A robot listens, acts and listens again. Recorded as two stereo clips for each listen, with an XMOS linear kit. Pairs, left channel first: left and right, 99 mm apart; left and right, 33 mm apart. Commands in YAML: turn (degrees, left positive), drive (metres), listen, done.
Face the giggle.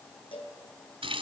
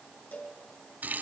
listen: true
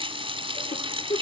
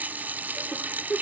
turn: 90
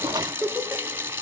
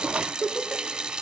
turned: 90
turn: -10
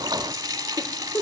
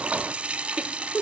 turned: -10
done: "Facing the giggle."